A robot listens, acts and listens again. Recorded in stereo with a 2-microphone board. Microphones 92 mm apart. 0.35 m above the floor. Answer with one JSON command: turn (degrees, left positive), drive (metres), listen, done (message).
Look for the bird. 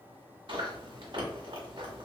{"listen": true}
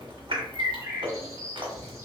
{"turn": -30}
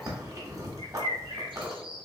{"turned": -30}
{"turn": -120}
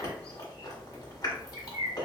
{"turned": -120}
{"turn": -40}
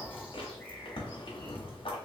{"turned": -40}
{"listen": true}
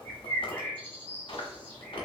{"turn": 20}
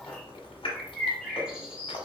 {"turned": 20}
{"done": "Found it: a bird, straight ahead, 1 to 2 m away."}